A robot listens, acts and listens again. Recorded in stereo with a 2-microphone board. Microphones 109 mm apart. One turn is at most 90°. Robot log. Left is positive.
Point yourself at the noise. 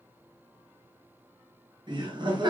note: The laughter: about 45° right or 135° right.
cmd yaw -45
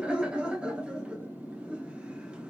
note: So it is at 10° right.
cmd yaw -10
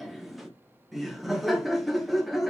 end: Facing the laughter.